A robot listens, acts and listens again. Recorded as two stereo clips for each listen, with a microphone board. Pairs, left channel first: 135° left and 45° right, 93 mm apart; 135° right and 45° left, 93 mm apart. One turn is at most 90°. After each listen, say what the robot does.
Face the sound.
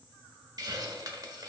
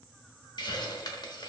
Turn 90° right.
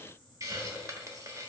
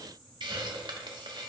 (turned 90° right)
Turn 10° left.
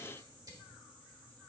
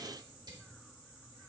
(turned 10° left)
Facing the hiss, 1 to 2 m away.